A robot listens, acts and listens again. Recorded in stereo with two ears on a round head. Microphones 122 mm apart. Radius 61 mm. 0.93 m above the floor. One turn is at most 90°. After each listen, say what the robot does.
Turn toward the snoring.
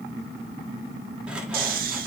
Turn 65° right.
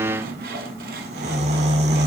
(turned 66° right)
Turn 45° right.
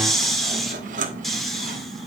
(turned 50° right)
Facing the snoring.